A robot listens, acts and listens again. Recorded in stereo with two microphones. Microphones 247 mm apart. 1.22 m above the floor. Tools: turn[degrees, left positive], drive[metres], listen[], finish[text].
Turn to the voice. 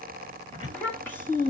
Action: turn[30]
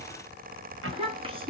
Thought: So it is at 20° right.
Action: turn[-20]
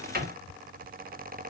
Action: listen[]
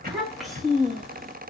Action: finish[Found it: a child speaking, straight ahead.]